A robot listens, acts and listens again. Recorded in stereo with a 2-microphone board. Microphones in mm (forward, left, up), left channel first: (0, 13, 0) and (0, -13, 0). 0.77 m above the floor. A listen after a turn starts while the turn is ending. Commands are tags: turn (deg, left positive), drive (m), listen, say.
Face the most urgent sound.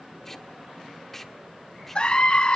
<turn deg="45"/>
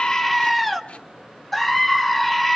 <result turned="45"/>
<turn deg="15"/>
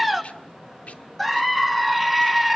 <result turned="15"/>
<say>Found it: a scream, straight ahead, 1 to 2 m away.</say>